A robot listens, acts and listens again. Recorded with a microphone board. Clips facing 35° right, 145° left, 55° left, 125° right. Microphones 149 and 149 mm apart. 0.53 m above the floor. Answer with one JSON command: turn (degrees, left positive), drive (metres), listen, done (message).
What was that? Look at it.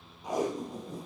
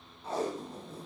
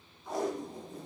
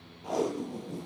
{"turn": -110}
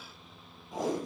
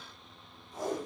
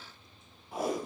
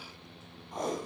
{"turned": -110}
{"turn": -30}
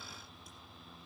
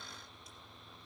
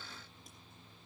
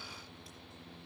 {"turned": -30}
{"listen": true}
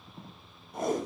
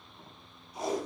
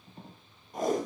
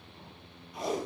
{"turn": 10}
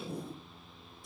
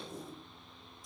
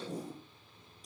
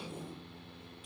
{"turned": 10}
{"done": "Found it: tape being pulled, straight ahead, over 4 m away."}